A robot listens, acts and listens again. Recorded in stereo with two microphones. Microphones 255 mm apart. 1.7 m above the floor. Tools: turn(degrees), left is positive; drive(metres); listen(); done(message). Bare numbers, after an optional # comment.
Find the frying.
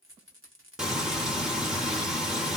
turn(30)
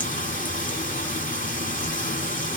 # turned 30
# So it is at 150° left.
turn(150)
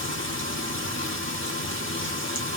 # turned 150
# The frying is now 50° left.
turn(50)
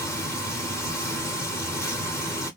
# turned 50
# The frying is now 10° left.
turn(10)
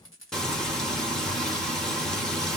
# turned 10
done("Facing the frying.")